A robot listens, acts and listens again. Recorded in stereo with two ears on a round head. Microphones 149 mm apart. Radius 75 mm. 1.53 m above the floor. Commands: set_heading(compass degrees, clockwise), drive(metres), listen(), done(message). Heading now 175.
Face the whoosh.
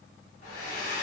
listen()
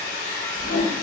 set_heading(85)
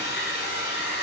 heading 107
set_heading(87)
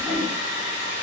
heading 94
done("Facing the whoosh.")